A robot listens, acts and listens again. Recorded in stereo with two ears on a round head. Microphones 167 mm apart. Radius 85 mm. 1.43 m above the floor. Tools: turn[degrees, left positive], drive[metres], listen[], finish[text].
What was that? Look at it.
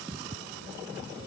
Action: listen[]
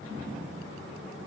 Action: listen[]
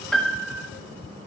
Action: turn[30]
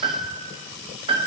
Thought: So it is at 25° right.
Action: turn[-25]
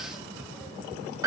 Thought: The piano is now 20° right.
Action: turn[-20]
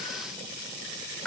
Action: finish[Found it: a piano, straight ahead.]